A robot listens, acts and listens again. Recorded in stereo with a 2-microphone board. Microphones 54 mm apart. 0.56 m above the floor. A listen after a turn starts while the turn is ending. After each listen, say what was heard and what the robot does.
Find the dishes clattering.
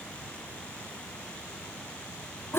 Keep listening.
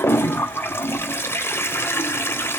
Keep listening.
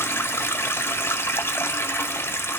I can't make out dishes clattering to turn to.